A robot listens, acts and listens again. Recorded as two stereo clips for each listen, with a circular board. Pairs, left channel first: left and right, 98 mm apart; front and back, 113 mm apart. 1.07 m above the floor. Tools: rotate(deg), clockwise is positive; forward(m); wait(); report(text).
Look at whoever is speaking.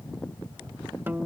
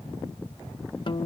wait()
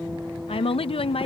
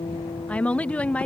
rotate(-80)
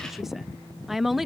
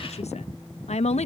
report("Facing the woman speaking.")